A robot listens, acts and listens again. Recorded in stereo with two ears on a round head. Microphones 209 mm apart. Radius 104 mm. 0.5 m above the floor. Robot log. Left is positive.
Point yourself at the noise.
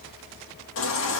note: The baby crying: about 60° left or 120° left.
cmd yaw +60
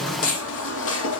note: So it is at 60° left.
cmd yaw +60
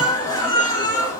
note: The baby crying is now 15° left.
cmd yaw +15
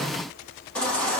end: Found it: a baby crying, straight ahead, over 4 m away.